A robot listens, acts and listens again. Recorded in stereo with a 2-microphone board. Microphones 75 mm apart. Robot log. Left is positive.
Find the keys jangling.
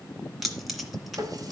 cmd yaw +30
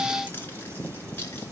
note: So it is at 155° left.
cmd yaw +155
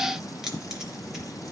end: Facing the keys jangling, 2 to 4 m away.